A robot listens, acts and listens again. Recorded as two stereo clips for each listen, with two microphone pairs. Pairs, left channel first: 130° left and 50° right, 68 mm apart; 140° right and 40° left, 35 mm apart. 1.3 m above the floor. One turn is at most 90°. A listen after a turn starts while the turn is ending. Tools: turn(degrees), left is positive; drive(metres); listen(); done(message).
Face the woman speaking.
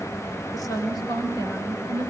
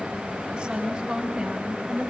turn(degrees=90)
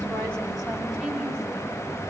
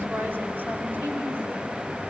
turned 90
turn(degrees=20)
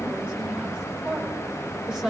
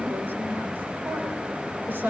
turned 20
turn(degrees=25)
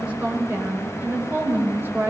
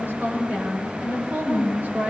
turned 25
done("Facing the woman speaking, over 4 m away.")